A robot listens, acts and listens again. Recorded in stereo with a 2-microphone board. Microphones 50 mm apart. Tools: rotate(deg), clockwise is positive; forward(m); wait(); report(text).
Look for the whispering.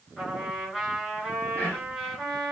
rotate(-30)
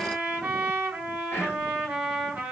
rotate(-120)
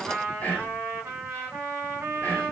rotate(-40)
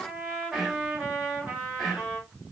report("Found it: whispering, straight ahead, 1 to 2 m away.")